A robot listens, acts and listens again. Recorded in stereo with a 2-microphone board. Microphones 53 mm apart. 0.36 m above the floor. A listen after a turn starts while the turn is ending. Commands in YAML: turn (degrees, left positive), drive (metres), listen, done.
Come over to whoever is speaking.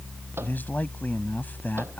turn: 35
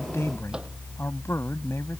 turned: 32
turn: 105
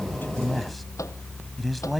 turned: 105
drive: 1.0
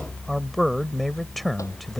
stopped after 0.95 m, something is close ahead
done: "Arrived at the man speaking, straight ahead."